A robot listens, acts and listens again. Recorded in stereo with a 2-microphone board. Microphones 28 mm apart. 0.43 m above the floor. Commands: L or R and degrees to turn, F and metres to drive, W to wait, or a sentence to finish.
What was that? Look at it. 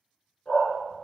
L50
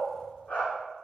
L80
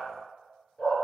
L60
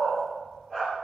L15
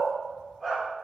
Facing the dog barking, 2 to 4 m away.